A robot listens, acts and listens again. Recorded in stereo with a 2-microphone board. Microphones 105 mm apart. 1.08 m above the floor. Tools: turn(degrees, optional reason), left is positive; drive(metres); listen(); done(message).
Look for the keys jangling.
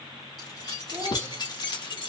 turn(degrees=45, reason="The keys jangling: about 45° left or 135° left.")
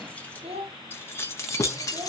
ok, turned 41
turn(degrees=35, reason="So it is at 35° left.")
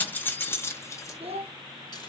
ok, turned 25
turn(degrees=30, reason="The keys jangling is now 30° left.")
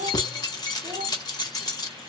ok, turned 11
turn(degrees=40, reason="The keys jangling is now 40° left.")
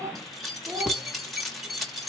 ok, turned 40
done("Facing the keys jangling, 1 to 2 m away.")